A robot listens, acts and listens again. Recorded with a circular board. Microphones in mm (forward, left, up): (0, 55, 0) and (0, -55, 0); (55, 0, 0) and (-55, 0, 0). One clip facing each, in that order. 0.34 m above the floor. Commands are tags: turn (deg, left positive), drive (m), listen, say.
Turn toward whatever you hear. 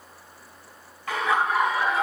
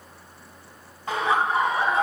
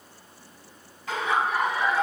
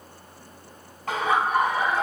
<turn deg="-135"/>
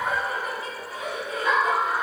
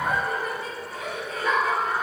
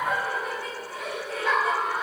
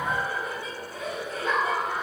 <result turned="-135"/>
<turn deg="20"/>
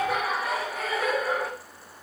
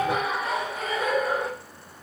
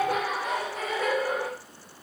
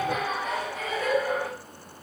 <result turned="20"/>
<say>Facing the laughter, 2 to 4 m away.</say>